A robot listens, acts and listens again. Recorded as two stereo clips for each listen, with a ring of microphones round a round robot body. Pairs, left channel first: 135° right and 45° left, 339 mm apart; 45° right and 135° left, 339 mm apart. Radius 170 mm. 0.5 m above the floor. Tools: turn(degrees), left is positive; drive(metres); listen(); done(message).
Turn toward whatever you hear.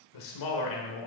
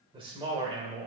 turn(degrees=-150)
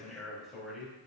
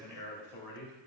turn(degrees=-45)
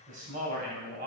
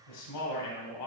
turn(degrees=-20)
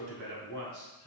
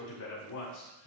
turn(degrees=-10)
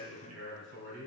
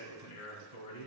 done("Found it: a man speaking, straight ahead.")